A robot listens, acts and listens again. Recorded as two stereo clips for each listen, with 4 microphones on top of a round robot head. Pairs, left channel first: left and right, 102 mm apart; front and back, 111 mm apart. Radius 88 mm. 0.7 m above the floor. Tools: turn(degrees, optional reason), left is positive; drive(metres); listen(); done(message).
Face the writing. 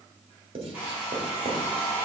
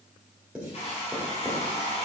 turn(degrees=-100, reason="The writing: 100° right.")
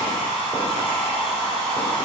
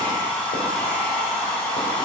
listen()
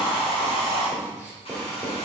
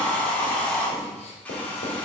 turn(degrees=-10, reason="The writing is now 10° right.")
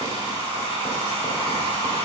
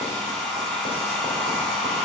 listen()
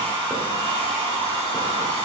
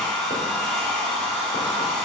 listen()
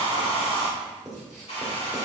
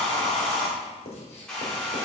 done("Facing the writing, 1 to 2 m away.")